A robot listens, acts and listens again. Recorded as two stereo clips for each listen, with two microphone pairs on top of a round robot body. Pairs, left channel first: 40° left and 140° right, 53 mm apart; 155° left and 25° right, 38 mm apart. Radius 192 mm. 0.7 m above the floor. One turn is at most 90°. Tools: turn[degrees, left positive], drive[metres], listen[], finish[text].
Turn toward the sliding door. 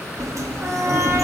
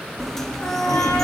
Thought: The sliding door: 125° right.
Action: turn[-90]
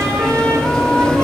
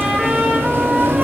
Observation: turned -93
Thought: The sliding door is now 30° right.
Action: turn[-30]
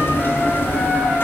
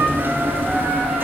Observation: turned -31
Action: finish[Found it: a sliding door, straight ahead.]